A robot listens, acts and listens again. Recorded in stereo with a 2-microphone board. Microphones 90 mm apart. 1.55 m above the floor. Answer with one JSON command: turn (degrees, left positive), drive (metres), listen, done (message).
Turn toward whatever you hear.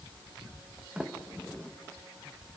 {"turn": -30}
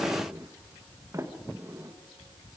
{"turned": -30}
{"turn": -145}
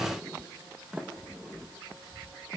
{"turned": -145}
{"turn": -10}
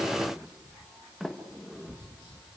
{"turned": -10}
{"done": "Facing the sliding door."}